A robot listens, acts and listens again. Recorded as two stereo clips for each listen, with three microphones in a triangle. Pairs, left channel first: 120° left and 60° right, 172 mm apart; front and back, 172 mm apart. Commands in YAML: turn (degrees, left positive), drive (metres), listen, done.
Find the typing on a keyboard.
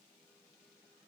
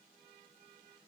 listen: true
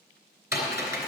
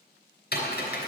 turn: 15
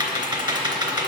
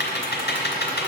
done: "Facing the typing on a keyboard."